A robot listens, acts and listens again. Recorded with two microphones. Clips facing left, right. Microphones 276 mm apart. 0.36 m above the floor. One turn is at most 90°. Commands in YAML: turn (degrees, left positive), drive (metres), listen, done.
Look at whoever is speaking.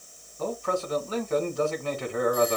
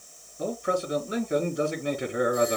turn: -15
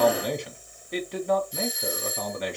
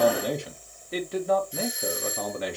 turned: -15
done: "Found it: a man speaking, straight ahead."